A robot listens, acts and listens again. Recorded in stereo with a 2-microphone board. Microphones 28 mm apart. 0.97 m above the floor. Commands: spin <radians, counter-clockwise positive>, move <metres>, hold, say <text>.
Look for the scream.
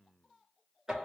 hold
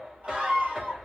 spin -1.22
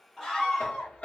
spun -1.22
say Found it: a scream, straight ahead.